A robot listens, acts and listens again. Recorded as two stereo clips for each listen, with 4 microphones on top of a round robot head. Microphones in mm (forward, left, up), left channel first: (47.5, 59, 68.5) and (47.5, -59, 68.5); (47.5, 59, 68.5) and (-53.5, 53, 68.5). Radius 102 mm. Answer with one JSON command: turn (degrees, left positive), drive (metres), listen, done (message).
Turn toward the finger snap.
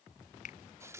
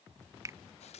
{"turn": 120}
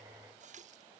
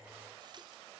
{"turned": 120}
{"listen": true}
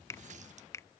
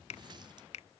{"turn": 20}
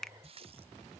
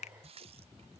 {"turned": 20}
{"done": "Found it: a finger snap, straight ahead."}